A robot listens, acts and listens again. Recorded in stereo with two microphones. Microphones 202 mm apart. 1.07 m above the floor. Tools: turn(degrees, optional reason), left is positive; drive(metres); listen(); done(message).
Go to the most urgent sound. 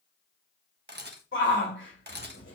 turn(degrees=70, reason="The shout: about 70° left or 110° left.")
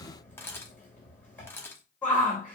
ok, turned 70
turn(degrees=10, reason="So it is at 10° left.")
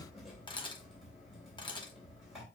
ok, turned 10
listen()
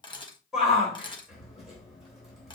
drive(metres=1.0)
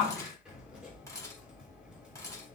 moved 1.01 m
drive(metres=1.0)
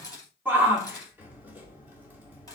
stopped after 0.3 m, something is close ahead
turn(degrees=-10, reason="The shout is now 10° right.")
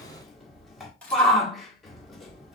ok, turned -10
done("I am next to the shout.")